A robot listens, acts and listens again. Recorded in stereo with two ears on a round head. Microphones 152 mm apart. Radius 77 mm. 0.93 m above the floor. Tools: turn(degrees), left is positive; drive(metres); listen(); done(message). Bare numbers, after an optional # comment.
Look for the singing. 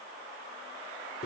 listen()
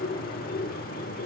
listen()
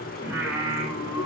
turn(-30)
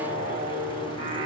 # So it is at 145° right.
turn(-145)
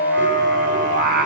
# The singing is now 60° right.
turn(-60)
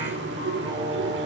listen()
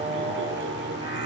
# The singing is now 25° right.
turn(-25)
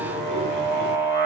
# The singing is now 10° right.
turn(-10)
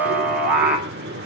done("Found it: singing, straight ahead.")